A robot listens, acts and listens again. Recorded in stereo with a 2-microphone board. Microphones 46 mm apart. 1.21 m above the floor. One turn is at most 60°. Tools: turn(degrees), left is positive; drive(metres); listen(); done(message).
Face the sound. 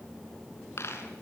turn(degrees=60)
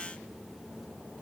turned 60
listen()
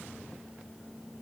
done("I heard a dropped coin, but can't make it out now. It was about 5° left or 55° left.")